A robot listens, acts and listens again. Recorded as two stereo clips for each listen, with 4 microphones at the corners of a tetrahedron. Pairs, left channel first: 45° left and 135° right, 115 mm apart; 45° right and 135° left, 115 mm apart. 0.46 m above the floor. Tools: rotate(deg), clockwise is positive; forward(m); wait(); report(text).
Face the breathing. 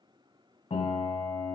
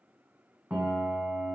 wait()
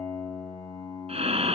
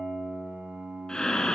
rotate(130)
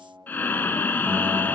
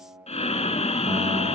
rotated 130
rotate(25)
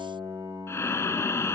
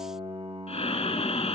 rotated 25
rotate(20)
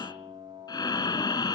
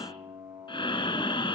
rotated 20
report("Found it: breathing, straight ahead.")